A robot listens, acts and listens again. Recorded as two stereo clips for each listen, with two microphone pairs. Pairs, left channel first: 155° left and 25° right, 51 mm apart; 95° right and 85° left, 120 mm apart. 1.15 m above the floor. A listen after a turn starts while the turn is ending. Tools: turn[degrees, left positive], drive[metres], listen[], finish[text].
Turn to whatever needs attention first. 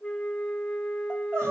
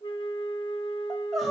Action: finish[Facing the crying, 2 to 4 m away.]